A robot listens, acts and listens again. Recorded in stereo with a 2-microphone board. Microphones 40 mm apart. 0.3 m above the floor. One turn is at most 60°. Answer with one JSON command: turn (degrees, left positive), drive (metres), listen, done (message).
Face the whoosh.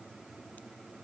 {"listen": true}
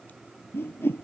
{"turn": 60}
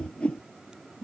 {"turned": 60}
{"turn": 30}
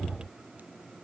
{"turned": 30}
{"listen": true}
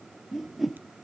{"done": "Found it: a whoosh, straight ahead."}